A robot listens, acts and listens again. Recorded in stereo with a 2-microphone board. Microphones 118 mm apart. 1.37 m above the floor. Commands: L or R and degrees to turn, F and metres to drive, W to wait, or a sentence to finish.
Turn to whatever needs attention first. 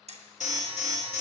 L90
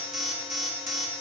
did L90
Found it: an alarm, straight ahead.